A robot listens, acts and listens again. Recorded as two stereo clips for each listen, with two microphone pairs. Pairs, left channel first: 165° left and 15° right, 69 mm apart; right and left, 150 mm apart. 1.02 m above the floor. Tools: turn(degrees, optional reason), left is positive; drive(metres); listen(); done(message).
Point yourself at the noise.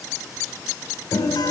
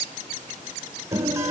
turn(degrees=160, reason="The guitar: 160° left.")
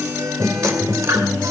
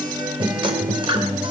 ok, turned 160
turn(degrees=35, reason="The guitar is now 35° left.")
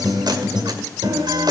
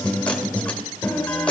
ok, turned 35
turn(degrees=-10, reason="The guitar is now 10° right.")
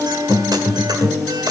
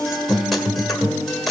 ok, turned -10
done("Facing the guitar, 1 to 2 m away.")